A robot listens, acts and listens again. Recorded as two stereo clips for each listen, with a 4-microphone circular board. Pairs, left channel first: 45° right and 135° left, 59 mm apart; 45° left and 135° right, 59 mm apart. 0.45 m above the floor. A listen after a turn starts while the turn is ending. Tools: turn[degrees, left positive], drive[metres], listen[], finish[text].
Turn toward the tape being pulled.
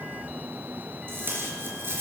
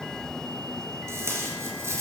Thought: The tape being pulled: 175° right.
Action: turn[-175]
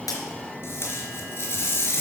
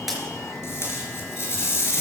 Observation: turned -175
Action: finish[Facing the tape being pulled.]